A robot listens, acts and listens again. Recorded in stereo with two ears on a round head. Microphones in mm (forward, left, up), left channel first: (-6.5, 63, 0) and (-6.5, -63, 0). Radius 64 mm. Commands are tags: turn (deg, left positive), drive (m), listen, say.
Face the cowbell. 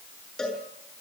<turn deg="30"/>
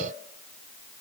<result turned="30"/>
<listen/>
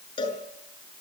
<turn deg="145"/>
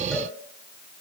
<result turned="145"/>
<listen/>
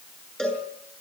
<say>Facing the cowbell.</say>